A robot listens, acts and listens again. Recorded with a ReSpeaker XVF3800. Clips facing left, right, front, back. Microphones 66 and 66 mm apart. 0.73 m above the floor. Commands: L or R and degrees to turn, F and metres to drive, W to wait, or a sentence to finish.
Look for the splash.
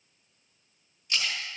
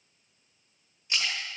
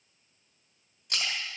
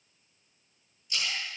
R25
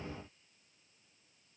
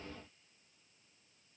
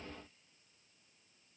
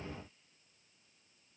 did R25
Facing where the splash came from. I can't hear it now.